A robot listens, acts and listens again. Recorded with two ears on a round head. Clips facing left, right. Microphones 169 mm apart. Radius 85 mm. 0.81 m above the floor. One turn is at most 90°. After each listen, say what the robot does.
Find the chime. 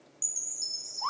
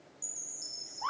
Turn 65° left.
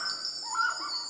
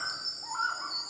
Turn 40° left.
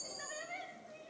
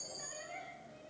Turn 15° left.
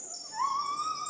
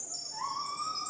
Facing the chime.